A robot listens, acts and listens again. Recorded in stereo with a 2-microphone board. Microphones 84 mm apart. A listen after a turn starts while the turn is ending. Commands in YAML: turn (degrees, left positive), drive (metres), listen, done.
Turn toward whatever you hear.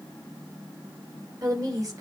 turn: -45
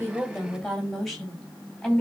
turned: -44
done: "Facing the woman speaking."